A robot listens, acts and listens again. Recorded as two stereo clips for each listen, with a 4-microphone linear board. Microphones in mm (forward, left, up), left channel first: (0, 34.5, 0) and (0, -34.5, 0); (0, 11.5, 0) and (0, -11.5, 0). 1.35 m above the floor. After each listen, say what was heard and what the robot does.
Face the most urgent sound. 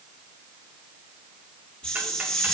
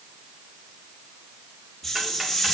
Keep listening.
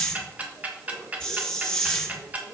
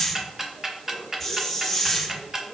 Keep listening.
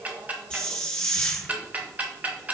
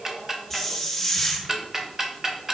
I can't make out anything urgent to turn to.